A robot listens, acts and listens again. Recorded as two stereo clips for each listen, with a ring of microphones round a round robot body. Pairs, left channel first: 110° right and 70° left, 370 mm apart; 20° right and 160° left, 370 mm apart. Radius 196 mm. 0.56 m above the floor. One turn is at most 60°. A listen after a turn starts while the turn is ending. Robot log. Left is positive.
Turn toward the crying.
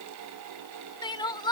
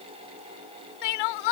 note: The crying: 35° right.
cmd yaw -35
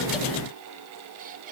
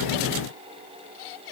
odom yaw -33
cmd idle
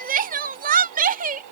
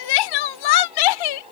end: Found it: crying, straight ahead.